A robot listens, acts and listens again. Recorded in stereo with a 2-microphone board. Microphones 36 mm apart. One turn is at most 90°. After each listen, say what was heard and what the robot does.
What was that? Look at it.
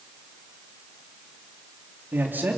The man speaking: about 70° right or 110° right. Turn 70° right.
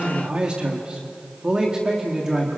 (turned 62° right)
So it is at 15° right. Turn 15° right.
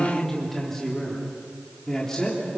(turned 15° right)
The man speaking is now 15° left. Turn 15° left.
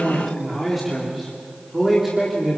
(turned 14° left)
Found it: a man speaking, straight ahead.